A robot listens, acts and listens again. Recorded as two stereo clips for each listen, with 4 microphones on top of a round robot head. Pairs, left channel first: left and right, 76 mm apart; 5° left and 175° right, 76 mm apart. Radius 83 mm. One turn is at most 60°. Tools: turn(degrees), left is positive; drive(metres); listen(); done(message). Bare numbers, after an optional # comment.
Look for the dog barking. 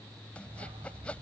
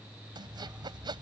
# The dog barking: 100° right.
turn(-60)
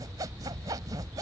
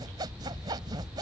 # The dog barking is now 45° right.
turn(-45)
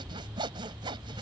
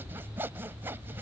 # The dog barking is now 15° right.
turn(-15)
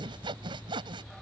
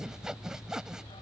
listen()
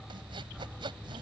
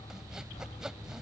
done("Found it: a dog barking, straight ahead.")